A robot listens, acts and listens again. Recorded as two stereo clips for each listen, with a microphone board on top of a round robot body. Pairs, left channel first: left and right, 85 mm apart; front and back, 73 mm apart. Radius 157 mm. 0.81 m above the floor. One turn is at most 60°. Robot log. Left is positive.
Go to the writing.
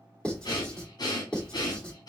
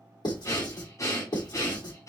note: The writing: 10° left.
cmd yaw +10
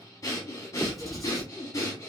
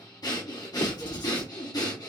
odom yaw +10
cmd fwd 1.0
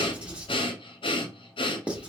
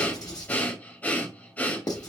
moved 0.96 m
note: The writing is now 15° right.
cmd yaw -15
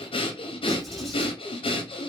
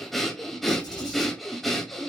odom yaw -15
cmd fwd 1.0
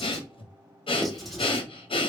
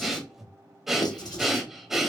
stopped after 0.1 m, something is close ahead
end: Arrived at the writing, straight ahead.